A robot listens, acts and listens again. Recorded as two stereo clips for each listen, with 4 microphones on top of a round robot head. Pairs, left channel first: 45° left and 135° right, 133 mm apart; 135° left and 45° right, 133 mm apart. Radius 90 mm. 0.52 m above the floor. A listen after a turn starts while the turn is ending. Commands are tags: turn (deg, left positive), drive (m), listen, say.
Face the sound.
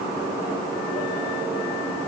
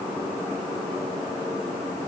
<listen/>
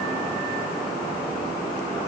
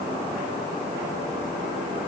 <listen/>
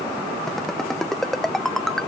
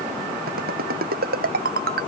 <turn deg="-45"/>
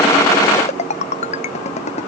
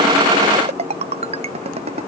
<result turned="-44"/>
<say>Facing the ringtone.</say>